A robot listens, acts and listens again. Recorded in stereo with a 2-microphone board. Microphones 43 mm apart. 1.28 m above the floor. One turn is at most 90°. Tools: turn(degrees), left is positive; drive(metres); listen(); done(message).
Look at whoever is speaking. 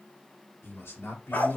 turn(degrees=90)
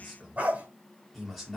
done("Found it: a man speaking, straight ahead, 2 to 4 m away.")